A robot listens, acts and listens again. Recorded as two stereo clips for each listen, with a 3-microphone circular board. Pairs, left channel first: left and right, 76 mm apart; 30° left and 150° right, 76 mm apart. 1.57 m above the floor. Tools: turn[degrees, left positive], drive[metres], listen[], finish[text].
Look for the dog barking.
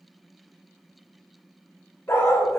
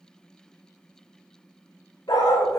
Thought: The dog barking: 45° left.
Action: turn[45]
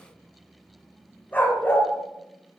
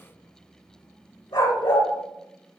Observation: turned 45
Thought: The dog barking is now 30° left.
Action: turn[30]
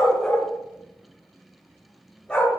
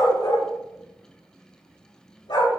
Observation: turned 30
Thought: The dog barking is now 20° left.
Action: turn[20]
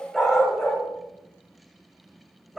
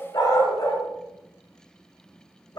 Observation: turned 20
Action: finish[Facing the dog barking.]